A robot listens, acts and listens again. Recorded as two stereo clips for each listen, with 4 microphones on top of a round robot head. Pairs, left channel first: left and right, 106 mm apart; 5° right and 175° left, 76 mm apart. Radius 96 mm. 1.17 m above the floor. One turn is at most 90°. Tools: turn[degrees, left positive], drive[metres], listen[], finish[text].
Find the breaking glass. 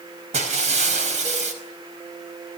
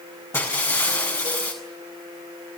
Thought: The breaking glass: 70° right.
Action: turn[-70]
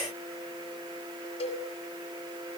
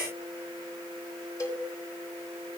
Action: finish[I heard breaking glass from this way, but can't make it out now.]